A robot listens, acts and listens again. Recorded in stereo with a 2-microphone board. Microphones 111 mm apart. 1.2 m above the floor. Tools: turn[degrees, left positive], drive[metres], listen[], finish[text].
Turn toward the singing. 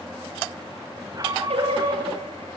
Action: turn[-90]
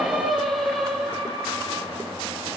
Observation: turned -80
Action: finish[Found it: singing, straight ahead.]